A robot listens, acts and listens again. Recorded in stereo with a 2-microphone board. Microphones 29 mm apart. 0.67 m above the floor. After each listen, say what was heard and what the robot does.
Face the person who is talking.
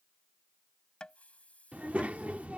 The child speaking: about 60° right or 120° right. Turn 60° right.
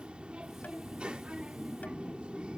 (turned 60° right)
So it is at 45° right. Turn 45° right.
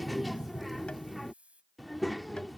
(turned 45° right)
Facing the child speaking.